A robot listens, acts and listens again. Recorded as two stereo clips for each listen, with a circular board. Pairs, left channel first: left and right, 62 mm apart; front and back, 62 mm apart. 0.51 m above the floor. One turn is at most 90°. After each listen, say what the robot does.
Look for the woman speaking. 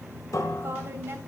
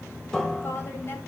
Turn 40° right.
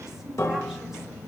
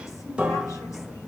Keep listening.
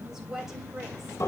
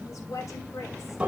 Facing the woman speaking, 2 to 4 m away.